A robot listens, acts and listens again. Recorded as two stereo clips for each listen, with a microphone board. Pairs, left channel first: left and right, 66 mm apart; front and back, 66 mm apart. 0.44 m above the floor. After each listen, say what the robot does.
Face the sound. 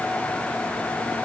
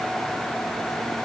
Keep listening.
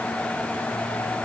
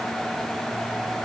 Keep listening.
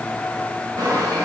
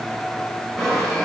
Turn 85° right.
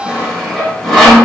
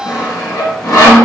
Facing the sawing, under 1 m away.